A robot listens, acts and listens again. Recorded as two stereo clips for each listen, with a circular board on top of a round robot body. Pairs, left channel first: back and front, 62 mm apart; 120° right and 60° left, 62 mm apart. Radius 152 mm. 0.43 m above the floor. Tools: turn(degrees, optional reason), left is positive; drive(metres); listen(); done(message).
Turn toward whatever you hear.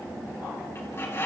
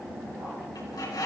turn(degrees=-130, reason="The bird: 130° right.")
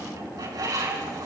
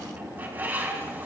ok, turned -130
done("Found it: a bird, straight ahead, over 4 m away.")